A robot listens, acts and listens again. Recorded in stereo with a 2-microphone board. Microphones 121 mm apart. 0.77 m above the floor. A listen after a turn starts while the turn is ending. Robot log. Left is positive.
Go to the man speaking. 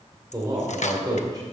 note: The man speaking: about 35° right or 145° right.
cmd yaw -35
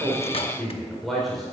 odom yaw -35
cmd fwd 1.0
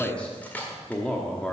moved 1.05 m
note: The man speaking is now 10° left.
cmd yaw +10
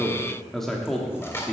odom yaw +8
cmd fwd 1.0
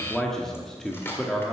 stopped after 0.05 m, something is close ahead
end: Arrived at the man speaking, straight ahead.